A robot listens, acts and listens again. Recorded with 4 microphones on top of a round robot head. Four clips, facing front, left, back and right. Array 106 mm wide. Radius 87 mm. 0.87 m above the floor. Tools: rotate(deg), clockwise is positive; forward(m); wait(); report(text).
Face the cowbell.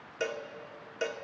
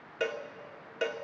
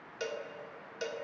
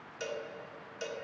rotate(-65)
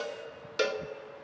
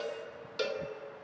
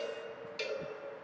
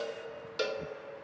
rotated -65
report("Found it: a cowbell, straight ahead, 1 to 2 m away.")